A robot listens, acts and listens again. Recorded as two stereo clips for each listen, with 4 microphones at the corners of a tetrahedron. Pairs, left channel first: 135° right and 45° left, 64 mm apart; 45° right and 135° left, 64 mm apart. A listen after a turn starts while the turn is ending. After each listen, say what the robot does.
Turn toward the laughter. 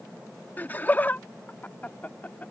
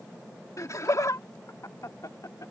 Turn 70° right.
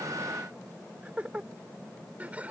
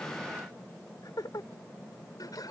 Turn 25° right.
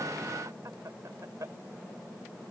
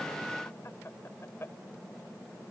Turn 10° left.
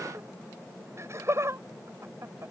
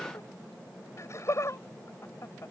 Facing the laughter.